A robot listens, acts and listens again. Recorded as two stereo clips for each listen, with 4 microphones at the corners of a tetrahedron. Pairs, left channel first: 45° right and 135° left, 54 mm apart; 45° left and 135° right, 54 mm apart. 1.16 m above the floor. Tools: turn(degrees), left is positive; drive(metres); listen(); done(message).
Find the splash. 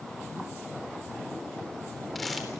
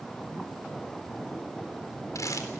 listen()
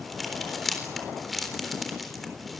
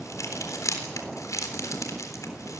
listen()
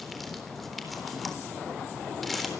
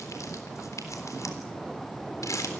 done("I can't make out a splash to turn to.")